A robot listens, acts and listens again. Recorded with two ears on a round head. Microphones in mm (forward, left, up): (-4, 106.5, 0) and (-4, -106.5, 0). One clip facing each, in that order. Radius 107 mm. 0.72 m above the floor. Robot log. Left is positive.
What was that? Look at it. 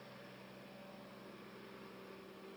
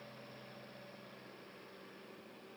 cmd idle
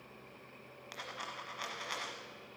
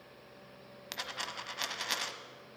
note: The dropped coin: about 55° right or 125° right.
cmd yaw -55
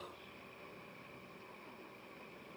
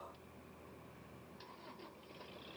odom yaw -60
cmd idle
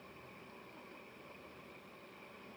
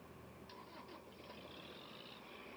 end: I heard a dropped coin, but can't make it out now. It was about 5° left or 65° right.